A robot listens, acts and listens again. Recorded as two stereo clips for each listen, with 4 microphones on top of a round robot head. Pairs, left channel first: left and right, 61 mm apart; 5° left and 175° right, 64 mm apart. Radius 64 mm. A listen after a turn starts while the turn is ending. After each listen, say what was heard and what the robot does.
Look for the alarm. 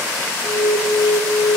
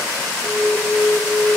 The alarm: 100° left. Turn 100° left.
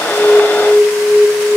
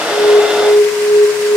Facing the alarm, 1 to 2 m away.